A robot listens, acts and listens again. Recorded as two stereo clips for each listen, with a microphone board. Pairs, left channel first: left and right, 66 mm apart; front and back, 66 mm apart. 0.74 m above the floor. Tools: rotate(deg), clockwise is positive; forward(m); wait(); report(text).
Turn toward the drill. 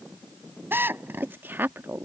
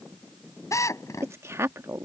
rotate(35)
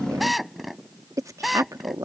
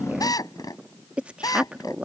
report("Facing the drill.")